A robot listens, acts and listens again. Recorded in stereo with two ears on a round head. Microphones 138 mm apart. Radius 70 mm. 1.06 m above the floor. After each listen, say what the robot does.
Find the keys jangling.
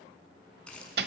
Turn 30° left.
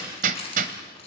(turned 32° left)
Turn 140° left.
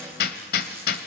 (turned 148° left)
Turn 10° right.
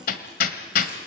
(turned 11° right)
Keep listening.
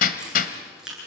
Facing the keys jangling, over 4 m away.